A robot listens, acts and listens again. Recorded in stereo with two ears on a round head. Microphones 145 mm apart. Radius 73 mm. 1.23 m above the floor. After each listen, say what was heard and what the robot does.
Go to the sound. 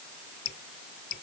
The dripping: about 70° left or 110° left. Turn 70° left.
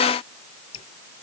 So it is at 35° left. Turn 35° left.
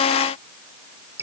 The dripping is now 15° right. Turn 15° right.
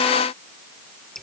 Drive 1.0 m forward.
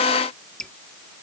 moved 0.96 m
Drive 1.0 m forward.
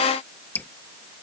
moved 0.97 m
The dripping is now 15° left. Turn 15° left.
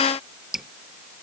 Drive 1.0 m forward.
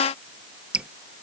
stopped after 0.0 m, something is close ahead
Arrived at the dripping, straight ahead.